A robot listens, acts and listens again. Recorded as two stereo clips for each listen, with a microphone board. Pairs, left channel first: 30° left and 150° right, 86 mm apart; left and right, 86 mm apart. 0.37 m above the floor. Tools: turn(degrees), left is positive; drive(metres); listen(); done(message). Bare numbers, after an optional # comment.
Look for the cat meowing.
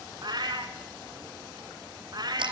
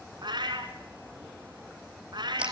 # The cat meowing: 115° right.
turn(-115)
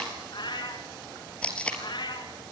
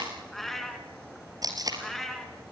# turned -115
done("Facing the cat meowing, 2 to 4 m away.")